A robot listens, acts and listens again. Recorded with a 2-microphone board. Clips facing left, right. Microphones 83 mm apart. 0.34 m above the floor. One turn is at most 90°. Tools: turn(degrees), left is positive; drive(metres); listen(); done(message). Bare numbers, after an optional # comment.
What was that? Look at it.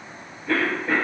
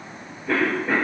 turn(-30)
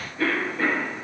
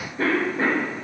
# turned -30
# So it is at 145° right.
turn(-90)
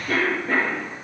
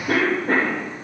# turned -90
# The cough is now 70° right.
turn(-70)
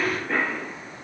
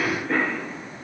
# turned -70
done("Facing the cough, 1 to 2 m away.")